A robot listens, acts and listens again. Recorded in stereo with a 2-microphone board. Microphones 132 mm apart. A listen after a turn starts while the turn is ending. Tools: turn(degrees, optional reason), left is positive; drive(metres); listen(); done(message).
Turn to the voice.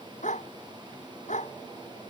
listen()
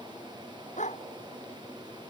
listen()
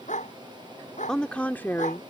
turn(degrees=20, reason="The woman speaking: about 20° left or 160° left.")
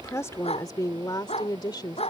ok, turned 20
turn(degrees=35, reason="The woman speaking: about 35° left or 145° left.")
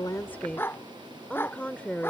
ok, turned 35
turn(degrees=10, reason="So it is at 10° left.")
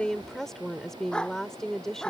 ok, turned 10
done("Found it: a woman speaking, straight ahead.")